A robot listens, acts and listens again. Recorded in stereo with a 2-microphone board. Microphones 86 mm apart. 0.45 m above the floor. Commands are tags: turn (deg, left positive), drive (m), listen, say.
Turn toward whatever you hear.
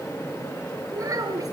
<turn deg="-40"/>
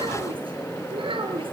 <turn deg="-95"/>
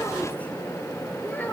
<listen/>
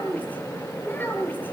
<turn deg="20"/>
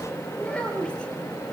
<turn deg="10"/>
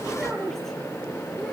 <say>Facing the child speaking.</say>